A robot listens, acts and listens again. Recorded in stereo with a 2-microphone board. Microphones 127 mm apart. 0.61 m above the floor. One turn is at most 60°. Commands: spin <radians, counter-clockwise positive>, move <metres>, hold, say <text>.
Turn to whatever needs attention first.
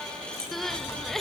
spin 0.52
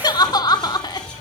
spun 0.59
spin 1.05
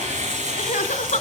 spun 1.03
spin 1.05
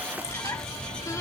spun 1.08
spin 0.44
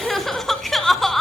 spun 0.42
say Found it: crying, straight ahead, 1 to 2 m away.